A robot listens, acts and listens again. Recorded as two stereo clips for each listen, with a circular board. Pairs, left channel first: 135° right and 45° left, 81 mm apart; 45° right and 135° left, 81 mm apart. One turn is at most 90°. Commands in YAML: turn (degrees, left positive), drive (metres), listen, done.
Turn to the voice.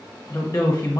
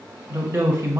turn: -90
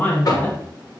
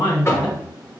turn: -65
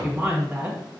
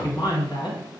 turn: -25
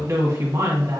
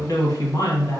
done: "Facing the woman speaking."